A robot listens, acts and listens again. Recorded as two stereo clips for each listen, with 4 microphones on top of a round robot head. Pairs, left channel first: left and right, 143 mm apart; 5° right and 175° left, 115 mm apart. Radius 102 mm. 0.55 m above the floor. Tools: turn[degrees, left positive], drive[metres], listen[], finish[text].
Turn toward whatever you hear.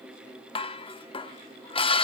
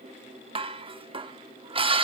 Thought: The dishes clattering: 140° left.
Action: turn[140]
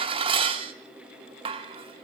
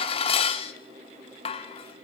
Thought: The dishes clattering is now 40° right.
Action: turn[-40]
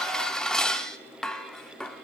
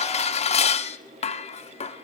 Action: finish[Facing the dishes clattering.]